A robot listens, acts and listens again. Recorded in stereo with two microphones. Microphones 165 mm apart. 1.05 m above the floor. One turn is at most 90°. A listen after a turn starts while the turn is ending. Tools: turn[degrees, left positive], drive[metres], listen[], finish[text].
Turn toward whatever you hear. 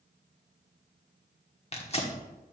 Thought: The tearing paper: about 40° left or 140° left.
Action: turn[40]
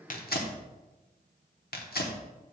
Thought: So it is at 100° left.
Action: turn[90]
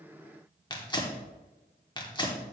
Thought: The tearing paper is now 30° left.
Action: turn[30]
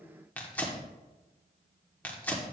Thought: The tearing paper is now 10° left.
Action: turn[10]
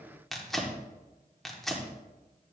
Action: finish[Facing the tearing paper.]